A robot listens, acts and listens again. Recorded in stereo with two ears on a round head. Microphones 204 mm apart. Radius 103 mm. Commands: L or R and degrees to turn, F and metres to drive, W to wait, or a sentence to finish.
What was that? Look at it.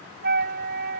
R45
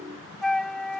Facing the flute.